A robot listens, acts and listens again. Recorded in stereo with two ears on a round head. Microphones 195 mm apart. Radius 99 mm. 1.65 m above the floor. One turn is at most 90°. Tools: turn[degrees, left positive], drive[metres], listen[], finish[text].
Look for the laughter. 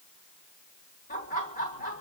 Thought: The laughter: about 40° left or 140° left.
Action: turn[40]
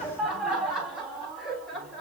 Action: finish[Facing the laughter, 2 to 4 m away.]